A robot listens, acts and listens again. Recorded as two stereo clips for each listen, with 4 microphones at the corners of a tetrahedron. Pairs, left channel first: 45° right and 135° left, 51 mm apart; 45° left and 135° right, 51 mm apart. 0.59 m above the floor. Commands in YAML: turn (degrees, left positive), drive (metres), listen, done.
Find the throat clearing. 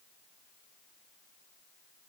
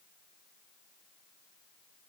listen: true
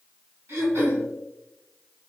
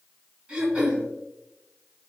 turn: 155
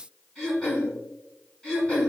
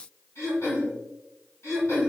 turn: 30
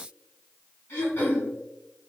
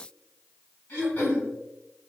done: "Facing the throat clearing, 1 to 2 m away."